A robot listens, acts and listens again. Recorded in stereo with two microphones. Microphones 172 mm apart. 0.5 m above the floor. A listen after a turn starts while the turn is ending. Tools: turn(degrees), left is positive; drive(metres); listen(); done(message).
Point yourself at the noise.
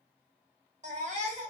turn(degrees=-45)
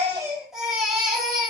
done("Found it: a baby crying, straight ahead, under 1 m away.")